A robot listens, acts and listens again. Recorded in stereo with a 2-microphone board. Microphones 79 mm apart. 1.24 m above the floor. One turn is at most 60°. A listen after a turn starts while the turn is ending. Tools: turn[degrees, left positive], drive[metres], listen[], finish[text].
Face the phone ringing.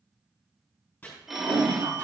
Action: turn[-30]
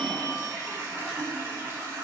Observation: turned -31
Action: listen[]
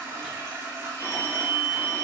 Thought: So it is at 30° left.
Action: turn[30]
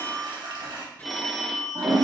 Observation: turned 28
Action: finish[Facing the phone ringing.]